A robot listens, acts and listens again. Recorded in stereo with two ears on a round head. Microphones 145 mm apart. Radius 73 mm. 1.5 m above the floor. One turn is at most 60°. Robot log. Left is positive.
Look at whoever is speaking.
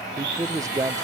note: The man speaking: about 20° right or 160° right.
cmd yaw -20
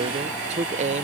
note: So it is at 140° right.
cmd yaw -60
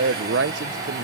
note: The man speaking is now 75° right.
cmd yaw -60
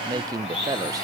note: The man speaking is now 20° right.
cmd yaw -20
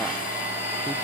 cmd idle
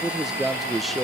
end: Found it: a man speaking, straight ahead.